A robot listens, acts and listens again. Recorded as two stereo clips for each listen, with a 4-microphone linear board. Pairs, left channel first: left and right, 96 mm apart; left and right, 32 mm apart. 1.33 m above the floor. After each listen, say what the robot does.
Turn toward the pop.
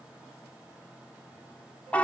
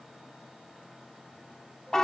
Keep listening.
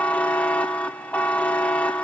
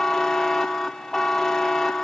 Keep listening.
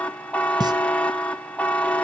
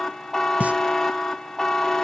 Turn 45° right.
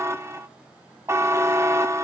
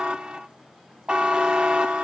Keep listening.
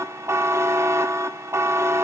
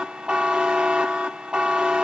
I heard a pop, but can't make it out now. It was about straight ahead or 90° right.